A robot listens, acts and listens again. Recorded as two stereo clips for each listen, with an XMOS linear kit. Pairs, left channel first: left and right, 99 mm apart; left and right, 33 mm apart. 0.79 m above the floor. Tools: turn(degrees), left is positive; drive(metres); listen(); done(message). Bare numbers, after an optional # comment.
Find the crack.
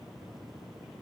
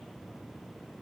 listen()
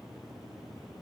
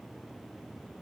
listen()
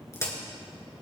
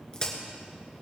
# The crack: about 30° left or 150° left.
turn(30)
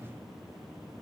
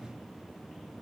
listen()
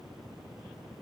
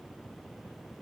done("I heard a crack, but can't make it out now. It was about straight ahead or 120° left.")